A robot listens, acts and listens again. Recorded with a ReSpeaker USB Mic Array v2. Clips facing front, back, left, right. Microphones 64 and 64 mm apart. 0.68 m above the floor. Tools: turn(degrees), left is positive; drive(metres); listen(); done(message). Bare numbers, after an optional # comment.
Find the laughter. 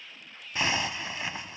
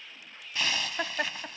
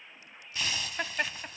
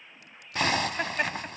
# The laughter: 170° right.
turn(-170)
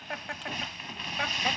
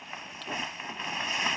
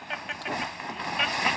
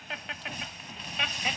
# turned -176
# The laughter is now 10° left.
turn(10)
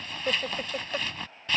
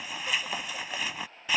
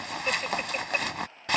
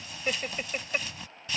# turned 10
done("Found it: laughter, straight ahead.")